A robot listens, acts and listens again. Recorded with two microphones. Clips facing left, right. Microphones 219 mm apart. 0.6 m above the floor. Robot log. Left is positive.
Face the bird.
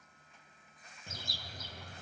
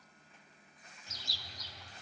note: The bird: about 50° left or 130° left.
cmd yaw +50
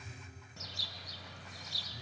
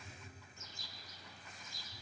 note: So it is at 75° left.
cmd yaw +75
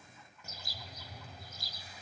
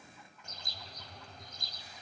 end: Facing the bird, under 1 m away.